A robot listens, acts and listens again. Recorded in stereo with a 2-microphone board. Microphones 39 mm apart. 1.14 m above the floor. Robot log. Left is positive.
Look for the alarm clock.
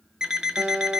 note: The alarm clock: about 20° right or 160° right.
cmd yaw -20
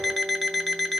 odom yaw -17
end: Found it: an alarm clock, straight ahead, under 1 m away.